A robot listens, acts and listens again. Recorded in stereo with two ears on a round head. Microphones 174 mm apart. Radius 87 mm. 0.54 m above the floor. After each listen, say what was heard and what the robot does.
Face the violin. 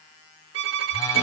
The violin: about 65° right or 115° right. Turn 65° right.
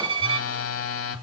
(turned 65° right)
So it is at 30° right. Turn 30° right.
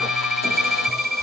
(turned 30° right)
Found it: a violin, straight ahead, 1 to 2 m away.